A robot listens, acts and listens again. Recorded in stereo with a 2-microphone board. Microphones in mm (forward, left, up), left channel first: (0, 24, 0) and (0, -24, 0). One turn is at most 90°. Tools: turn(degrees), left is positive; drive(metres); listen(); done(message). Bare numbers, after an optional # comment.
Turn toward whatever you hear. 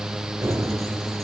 turn(-90)
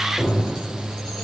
done("Found it: keys jangling, straight ahead.")